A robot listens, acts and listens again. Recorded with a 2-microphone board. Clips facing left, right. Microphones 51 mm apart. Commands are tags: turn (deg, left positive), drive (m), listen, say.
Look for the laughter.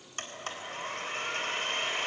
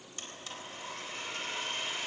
<listen/>
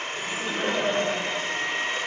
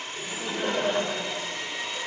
<turn deg="30"/>
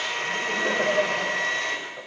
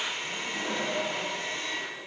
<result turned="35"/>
<turn deg="135"/>
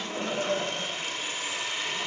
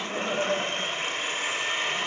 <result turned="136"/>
<turn deg="-10"/>
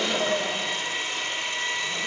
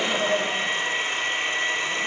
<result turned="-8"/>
<say>Found it: laughter, straight ahead, over 4 m away.</say>